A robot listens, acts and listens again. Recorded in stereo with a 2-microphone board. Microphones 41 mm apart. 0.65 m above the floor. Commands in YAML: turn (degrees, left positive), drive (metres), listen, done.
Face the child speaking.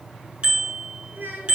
turn: -50
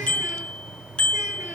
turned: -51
listen: true
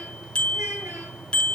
listen: true
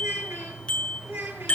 turn: -85
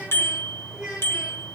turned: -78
turn: -20
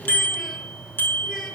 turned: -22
listen: true
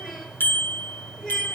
done: "Facing the child speaking."